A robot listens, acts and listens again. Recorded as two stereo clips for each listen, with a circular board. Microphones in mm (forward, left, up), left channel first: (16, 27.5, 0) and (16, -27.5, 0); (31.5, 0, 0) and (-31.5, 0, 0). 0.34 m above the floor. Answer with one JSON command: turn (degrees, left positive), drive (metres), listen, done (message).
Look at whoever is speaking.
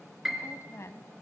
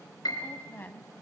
{"turn": 55}
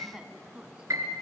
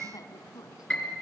{"turn": -20}
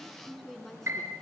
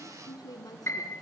{"done": "Found it: a woman speaking, straight ahead, 2 to 4 m away."}